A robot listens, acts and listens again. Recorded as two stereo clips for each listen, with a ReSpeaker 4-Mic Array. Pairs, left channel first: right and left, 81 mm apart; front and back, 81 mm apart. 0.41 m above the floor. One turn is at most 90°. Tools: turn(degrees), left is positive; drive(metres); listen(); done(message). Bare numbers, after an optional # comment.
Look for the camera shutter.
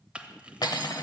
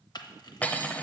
# The camera shutter: 15° left.
turn(15)
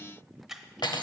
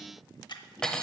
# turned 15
done("Facing the camera shutter, under 1 m away.")